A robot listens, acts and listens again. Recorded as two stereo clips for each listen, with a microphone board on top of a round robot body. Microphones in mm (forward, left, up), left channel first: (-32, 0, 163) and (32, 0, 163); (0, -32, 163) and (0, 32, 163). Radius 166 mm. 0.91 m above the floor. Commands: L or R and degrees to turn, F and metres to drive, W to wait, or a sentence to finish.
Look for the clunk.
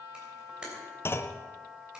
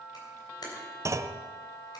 L130
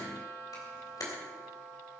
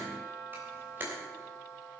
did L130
I heard a clunk from this way, but can't make it out now.